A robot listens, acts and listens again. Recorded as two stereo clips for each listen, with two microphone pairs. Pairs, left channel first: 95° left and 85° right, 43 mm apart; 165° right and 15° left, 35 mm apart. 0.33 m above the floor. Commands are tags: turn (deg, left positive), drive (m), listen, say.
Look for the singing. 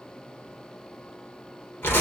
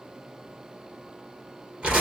<listen/>
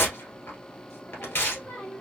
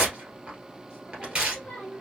<turn deg="130"/>
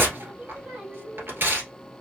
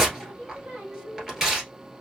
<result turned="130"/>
<turn deg="-30"/>
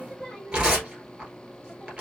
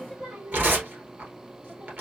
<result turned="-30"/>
<say>Facing the singing.</say>